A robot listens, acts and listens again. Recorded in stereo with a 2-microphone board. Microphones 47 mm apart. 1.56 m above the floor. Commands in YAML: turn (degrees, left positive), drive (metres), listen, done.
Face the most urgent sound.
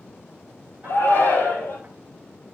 turn: 45
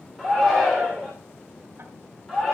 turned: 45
done: "Found it: a shout, straight ahead, over 4 m away."